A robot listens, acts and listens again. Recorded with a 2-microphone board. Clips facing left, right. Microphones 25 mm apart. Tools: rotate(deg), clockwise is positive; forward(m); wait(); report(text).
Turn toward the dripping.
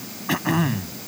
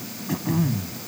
wait()
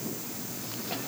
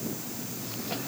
wait()
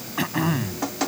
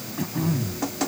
rotate(-30)
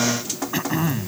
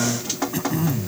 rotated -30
rotate(20)
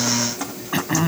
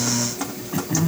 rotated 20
report("Found it: dripping, straight ahead.")